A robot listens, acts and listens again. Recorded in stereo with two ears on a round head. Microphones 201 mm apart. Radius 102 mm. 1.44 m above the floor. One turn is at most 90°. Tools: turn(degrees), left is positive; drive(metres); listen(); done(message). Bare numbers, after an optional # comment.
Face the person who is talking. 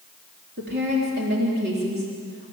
# The woman speaking: about 45° right or 135° right.
turn(-45)
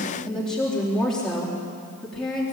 done("Found it: a woman speaking, straight ahead.")